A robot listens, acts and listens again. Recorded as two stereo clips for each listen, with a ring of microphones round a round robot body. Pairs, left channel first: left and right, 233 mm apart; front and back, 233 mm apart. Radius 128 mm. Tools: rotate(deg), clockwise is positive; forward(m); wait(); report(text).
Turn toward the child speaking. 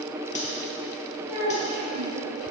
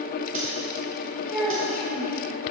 rotate(90)
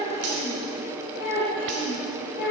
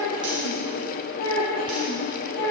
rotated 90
rotate(-35)
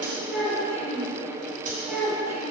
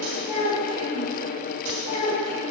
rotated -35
report("Facing the child speaking.")